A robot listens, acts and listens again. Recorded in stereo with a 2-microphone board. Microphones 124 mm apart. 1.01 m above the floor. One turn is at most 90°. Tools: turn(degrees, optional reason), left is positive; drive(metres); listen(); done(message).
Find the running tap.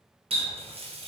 turn(degrees=-55, reason="The running tap: about 55° right or 125° right.")
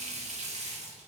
turn(degrees=-70, reason="So it is at 70° right.")
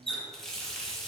done("Facing the running tap, under 1 m away.")